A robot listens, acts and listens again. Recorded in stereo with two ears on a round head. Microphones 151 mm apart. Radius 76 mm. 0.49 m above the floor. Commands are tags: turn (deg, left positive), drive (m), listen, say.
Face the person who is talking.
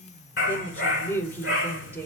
<turn deg="30"/>
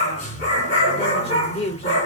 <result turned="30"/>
<turn deg="135"/>
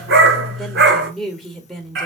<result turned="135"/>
<say>Found it: a woman speaking, straight ahead.</say>